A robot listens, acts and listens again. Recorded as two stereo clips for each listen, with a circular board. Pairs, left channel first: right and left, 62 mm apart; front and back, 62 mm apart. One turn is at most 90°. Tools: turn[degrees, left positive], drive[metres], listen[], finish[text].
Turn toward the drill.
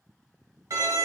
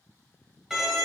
Action: listen[]
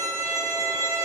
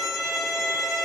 Action: listen[]
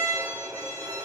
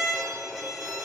Action: finish[I can't make out a drill to turn to.]